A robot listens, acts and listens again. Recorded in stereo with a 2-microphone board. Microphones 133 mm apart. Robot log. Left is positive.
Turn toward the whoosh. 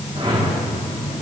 note: The whoosh: about 50° right or 130° right.
cmd yaw -50
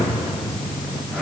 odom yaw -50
end: Found it: a whoosh, straight ahead, 2 to 4 m away.